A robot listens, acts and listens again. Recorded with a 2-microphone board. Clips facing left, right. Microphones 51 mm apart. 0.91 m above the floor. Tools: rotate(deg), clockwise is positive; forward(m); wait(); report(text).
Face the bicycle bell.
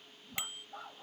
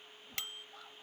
rotate(-15)
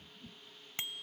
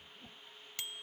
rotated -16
rotate(-145)
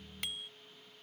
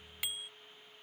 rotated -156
rotate(10)
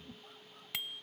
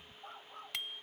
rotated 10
report("Found it: a bicycle bell, straight ahead.")